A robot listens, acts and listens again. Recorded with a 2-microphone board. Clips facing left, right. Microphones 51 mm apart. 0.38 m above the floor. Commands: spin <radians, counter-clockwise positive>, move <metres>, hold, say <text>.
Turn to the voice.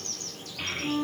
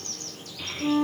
spin 0.87
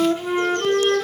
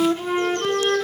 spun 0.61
hold
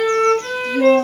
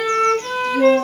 hold
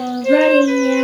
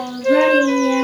spin 0.26
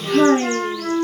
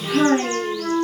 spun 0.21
say Facing the child speaking.